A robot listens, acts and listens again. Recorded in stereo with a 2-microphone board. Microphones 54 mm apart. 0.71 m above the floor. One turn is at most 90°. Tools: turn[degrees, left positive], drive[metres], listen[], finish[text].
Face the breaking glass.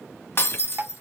Thought: The breaking glass: about 50° left or 130° left.
Action: turn[50]
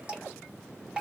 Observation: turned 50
Action: listen[]
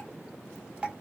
Action: finish[I heard breaking glass, but can't make it out now. It was about straight ahead or 80° left.]